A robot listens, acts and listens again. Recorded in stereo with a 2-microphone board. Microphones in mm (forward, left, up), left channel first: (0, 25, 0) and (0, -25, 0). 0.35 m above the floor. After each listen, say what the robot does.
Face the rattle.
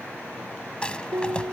Turn 25° left.
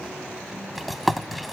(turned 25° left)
Found it: a rattle, straight ahead.